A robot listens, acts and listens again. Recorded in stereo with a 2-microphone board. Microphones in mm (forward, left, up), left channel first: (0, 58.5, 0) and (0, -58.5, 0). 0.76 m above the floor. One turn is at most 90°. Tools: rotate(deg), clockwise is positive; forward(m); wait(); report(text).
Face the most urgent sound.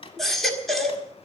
rotate(-30)
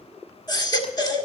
rotate(-90)
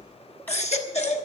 rotate(-75)
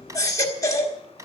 rotate(-30)
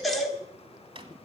report("Found it: a baby crying, straight ahead, 1 to 2 m away.")